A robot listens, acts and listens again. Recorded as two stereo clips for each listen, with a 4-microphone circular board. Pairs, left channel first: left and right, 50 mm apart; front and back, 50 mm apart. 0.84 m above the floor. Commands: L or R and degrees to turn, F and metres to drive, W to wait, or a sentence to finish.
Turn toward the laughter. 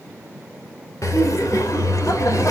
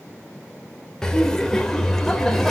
L85
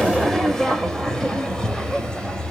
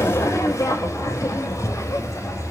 L15
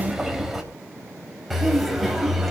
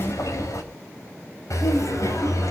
Found it: laughter, straight ahead.